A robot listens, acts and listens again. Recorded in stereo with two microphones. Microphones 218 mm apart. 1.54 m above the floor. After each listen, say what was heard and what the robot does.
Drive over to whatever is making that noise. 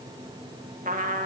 The trumpet: about 40° right or 140° right. Turn 40° right.
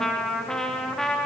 Drive 1.0 m forward.
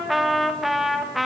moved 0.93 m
Drive 1.0 m forward.
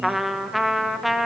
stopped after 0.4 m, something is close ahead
I am next to the trumpet.